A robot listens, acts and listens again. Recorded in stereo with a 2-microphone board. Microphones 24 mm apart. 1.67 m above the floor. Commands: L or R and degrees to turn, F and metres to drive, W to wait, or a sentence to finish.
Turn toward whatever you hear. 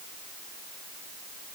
W
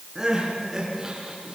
R20
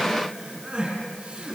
R140
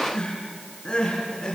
L30
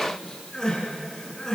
L20
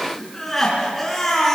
Facing the crying, over 4 m away.